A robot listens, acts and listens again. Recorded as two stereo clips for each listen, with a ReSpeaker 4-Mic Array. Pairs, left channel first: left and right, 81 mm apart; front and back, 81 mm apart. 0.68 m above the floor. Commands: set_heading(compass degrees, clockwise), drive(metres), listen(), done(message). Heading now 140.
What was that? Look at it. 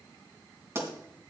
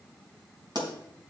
set_heading(290)
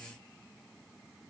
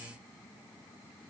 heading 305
set_heading(290)
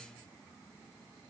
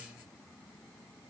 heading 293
done("I heard a pop from this way, but can't make it out now.")